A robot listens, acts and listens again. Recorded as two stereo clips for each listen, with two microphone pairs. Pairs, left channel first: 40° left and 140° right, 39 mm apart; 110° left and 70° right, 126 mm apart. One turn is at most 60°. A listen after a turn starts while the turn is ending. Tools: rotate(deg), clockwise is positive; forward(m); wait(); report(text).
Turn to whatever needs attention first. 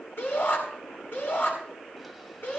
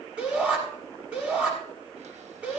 rotate(-10)
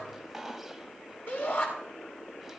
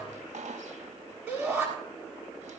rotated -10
report("Found it: a shout, straight ahead, over 4 m away.")